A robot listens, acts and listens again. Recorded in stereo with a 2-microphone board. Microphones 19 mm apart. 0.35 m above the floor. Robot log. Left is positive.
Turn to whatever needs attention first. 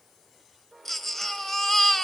note: The baby crying: about 15° left or 165° left.
cmd yaw +15
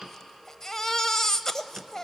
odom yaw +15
note: So it is at 150° left.
cmd yaw +150
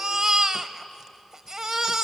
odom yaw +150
note: The baby crying is now 35° right.
cmd yaw -35
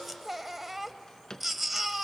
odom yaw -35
note: The baby crying is now 10° right.
cmd yaw -10
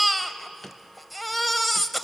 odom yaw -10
end: Facing the baby crying.